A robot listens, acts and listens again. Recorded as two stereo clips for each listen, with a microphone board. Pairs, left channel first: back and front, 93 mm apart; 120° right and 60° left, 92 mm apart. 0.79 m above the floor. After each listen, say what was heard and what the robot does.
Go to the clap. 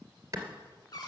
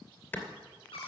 The clap: 55° right. Turn 55° right.
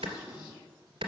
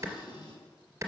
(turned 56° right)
Drive 1.0 m forward.
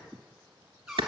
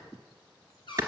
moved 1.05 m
Drive 1.0 m forward.
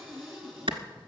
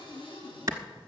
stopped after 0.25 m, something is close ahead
Arrived at the clap, straight ahead.